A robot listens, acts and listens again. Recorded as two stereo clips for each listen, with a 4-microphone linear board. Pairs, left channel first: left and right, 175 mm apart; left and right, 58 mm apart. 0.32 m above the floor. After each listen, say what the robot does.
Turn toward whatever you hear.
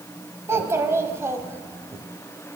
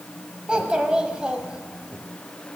Turn 15° right.
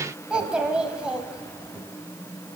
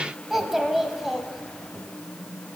Facing the child speaking, 1 to 2 m away.